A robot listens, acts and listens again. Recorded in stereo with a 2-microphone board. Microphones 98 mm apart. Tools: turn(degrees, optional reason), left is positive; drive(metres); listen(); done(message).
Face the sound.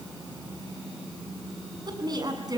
turn(degrees=-40, reason="The woman speaking: about 40° right or 140° right.")
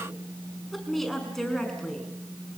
done("Facing the woman speaking, over 4 m away.")